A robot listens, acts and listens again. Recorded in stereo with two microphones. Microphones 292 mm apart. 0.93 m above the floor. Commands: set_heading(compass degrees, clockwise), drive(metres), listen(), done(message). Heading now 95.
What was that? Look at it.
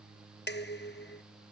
set_heading(60)
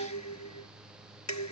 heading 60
set_heading(310)
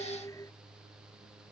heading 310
set_heading(300)
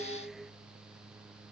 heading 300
done("Found it: dishes clattering, straight ahead.")